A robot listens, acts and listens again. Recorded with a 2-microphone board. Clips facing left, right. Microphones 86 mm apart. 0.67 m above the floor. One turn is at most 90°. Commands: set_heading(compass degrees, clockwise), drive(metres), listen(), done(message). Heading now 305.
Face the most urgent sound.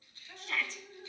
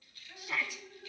set_heading(335)
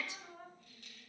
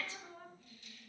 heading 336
set_heading(316)
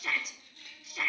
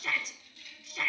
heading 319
done("Found it: a shout, straight ahead, under 1 m away.")